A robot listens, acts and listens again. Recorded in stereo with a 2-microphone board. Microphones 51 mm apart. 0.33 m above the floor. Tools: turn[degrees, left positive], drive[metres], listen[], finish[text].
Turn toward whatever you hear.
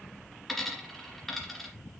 Action: turn[30]
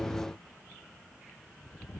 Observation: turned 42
Action: listen[]
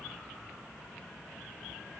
Action: finish[I heard a dropped coin, but can't make it out now. It was about 35° right or 130° left.]